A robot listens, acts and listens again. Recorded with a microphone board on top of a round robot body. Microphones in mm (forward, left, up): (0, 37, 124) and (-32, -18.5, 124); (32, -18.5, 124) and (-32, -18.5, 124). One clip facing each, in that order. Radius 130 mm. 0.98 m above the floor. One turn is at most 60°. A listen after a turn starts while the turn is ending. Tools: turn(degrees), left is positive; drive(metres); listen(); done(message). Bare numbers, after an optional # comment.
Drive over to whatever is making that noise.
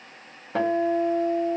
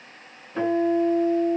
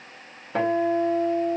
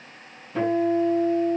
# The guitar: 35° left.
turn(35)
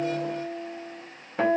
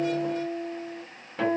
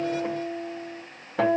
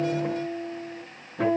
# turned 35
drive(1.0)
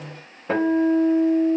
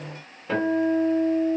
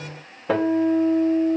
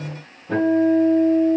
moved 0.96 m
drive(1.0)
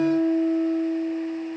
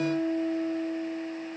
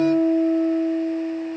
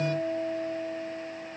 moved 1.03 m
drive(1.0)
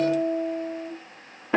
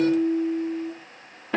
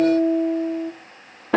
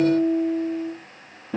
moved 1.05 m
# The guitar is now 15° right.
turn(-15)
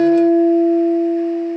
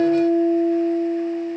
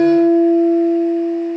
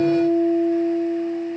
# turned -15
drive(1.0)
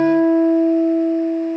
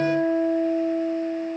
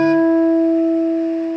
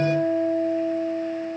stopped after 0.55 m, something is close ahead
done("I am next to the guitar.")